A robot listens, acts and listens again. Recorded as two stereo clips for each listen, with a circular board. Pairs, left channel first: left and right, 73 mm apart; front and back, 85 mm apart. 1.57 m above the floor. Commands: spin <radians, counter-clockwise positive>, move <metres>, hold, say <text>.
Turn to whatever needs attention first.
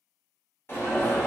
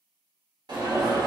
spin 2.53
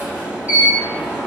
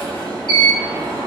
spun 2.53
spin -0.35
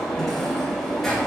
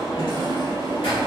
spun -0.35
say Facing the alarm.